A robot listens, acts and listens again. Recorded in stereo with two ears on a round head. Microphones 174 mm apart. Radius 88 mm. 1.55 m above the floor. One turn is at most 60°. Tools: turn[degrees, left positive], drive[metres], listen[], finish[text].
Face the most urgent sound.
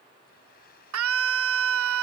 Action: turn[-60]
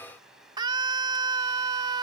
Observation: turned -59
Thought: So it is at 20° right.
Action: turn[-20]
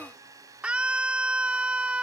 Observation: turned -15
Action: finish[Found it: a scream, straight ahead.]